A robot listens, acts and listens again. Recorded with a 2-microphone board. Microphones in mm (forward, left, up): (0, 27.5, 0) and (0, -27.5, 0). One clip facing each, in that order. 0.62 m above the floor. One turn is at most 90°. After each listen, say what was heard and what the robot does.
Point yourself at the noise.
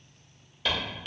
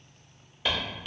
Turn 30° right.
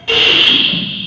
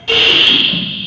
So it is at 15° left. Turn 15° left.
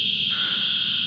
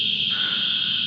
Found it: a hiss, straight ahead, 1 to 2 m away.